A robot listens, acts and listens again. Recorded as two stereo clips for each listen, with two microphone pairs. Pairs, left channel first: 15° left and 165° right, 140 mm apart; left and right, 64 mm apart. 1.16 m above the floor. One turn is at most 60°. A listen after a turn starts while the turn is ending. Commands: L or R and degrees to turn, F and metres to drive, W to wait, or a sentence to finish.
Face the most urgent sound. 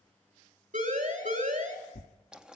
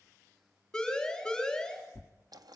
L60
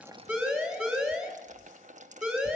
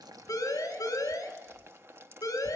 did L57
L60
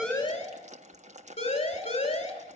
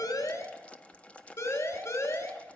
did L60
L55
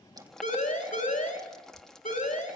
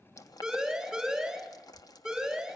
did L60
Facing the siren.